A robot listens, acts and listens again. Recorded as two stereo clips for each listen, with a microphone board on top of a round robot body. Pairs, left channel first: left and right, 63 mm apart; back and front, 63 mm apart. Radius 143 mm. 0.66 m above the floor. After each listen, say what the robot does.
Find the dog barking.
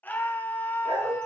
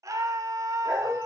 Turn 80° right.
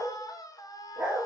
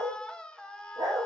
Turn 15° right.
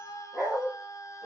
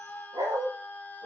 Found it: a dog barking, straight ahead, over 4 m away.